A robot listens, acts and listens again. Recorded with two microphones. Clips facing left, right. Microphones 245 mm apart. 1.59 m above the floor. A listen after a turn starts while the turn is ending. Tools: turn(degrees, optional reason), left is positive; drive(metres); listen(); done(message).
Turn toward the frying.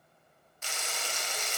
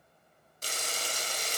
turn(degrees=-40, reason="The frying: about 40° right or 140° right.")
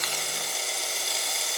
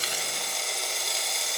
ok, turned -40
done("Found it: frying, straight ahead, 1 to 2 m away.")